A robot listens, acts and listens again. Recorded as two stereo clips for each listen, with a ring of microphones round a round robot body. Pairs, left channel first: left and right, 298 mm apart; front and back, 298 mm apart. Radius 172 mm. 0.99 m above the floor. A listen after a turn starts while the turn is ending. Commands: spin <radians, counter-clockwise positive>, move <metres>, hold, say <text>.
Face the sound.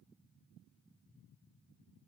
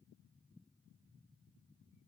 hold
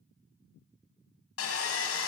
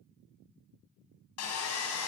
spin 0.79
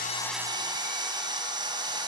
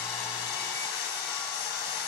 spin -0.26
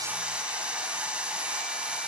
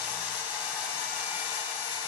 say Found it: sawing, straight ahead.